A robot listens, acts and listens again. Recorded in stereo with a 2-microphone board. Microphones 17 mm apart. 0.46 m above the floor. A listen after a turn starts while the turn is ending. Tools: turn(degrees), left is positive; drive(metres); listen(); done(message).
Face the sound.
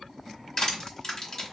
turn(degrees=35)
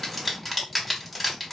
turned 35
done("Facing the crushing.")